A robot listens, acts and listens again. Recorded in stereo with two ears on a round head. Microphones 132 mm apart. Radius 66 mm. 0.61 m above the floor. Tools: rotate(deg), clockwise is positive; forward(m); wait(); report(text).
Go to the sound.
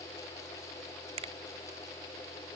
rotate(50)
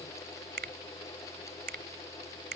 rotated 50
rotate(80)
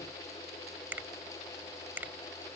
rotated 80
rotate(15)
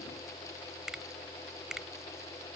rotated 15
forward(1.0)
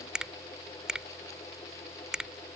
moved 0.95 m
forward(1.0)
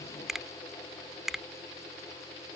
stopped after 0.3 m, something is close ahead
report("I am next to the finger snap.")